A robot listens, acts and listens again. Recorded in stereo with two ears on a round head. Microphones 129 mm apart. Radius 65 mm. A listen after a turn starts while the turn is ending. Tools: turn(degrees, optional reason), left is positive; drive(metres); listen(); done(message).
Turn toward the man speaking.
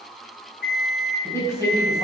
turn(degrees=20, reason="The man speaking: about 20° left or 160° left.")
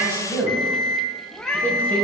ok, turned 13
turn(degrees=30)
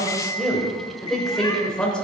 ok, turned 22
turn(degrees=30)
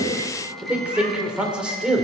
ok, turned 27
done("Facing the man speaking.")